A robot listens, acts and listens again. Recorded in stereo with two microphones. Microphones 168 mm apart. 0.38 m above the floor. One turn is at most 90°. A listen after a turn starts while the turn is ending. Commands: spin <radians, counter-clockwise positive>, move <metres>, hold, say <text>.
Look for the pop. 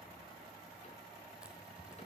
hold
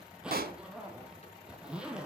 spin -1.13
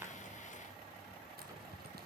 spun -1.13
hold
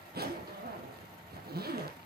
say I heard a pop, but can't make it out now. It was about straight ahead or 50° right.